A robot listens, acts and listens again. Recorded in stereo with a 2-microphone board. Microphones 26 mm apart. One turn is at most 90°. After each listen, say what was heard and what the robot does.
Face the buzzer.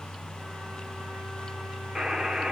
The buzzer: about 30° right or 150° right. Turn 30° right.
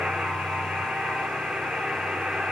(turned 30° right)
So it is at 115° right. Turn 90° right.
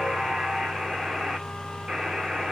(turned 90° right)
The buzzer is now 35° right. Turn 35° right.
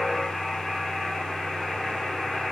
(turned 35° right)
The buzzer is now 15° right. Turn 15° right.
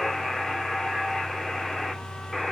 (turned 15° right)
Found it: a buzzer, straight ahead.